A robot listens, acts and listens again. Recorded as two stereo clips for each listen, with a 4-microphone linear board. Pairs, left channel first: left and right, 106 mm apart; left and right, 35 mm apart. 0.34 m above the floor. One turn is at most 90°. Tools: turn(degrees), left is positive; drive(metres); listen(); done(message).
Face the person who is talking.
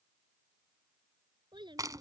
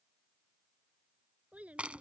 turn(degrees=-45)
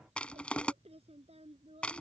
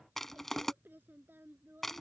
turn(degrees=-85)
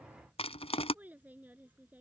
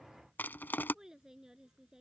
turn(degrees=-15)
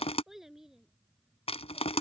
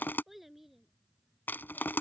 done("Facing the child speaking.")